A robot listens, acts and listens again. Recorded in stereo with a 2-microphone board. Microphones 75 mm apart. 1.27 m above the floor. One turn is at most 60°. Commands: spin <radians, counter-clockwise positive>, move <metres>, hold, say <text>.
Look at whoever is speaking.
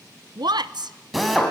spin -1.05
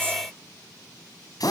hold
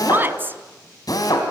spin -0.44
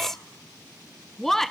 say Found it: a woman speaking, straight ahead, under 1 m away.